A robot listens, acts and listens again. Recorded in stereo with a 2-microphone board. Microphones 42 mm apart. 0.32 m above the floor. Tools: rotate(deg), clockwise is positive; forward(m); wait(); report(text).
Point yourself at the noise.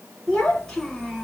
rotate(-30)
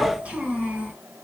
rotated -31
rotate(35)
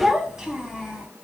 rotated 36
rotate(20)
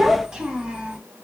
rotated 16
rotate(30)
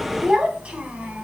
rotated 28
rotate(30)
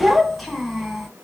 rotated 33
report("Facing the child speaking, 1 to 2 m away.")